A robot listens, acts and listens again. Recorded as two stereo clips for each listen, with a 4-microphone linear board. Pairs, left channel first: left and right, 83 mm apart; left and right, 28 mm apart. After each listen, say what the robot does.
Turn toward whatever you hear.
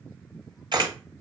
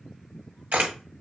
Turn 70° right.
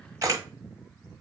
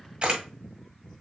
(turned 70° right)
Turn 40° right.
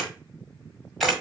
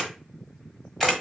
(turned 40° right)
Found it: a camera shutter, straight ahead, 1 to 2 m away.